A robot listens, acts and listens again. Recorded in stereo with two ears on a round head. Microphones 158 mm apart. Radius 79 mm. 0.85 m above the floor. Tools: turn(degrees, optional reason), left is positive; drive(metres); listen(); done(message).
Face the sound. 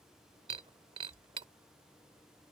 turn(degrees=-30, reason="The breaking glass: about 30° right or 150° right.")
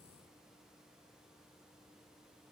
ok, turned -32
listen()
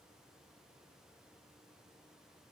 done("I heard breaking glass, but can't make it out now. It was about straight ahead or 115° right.")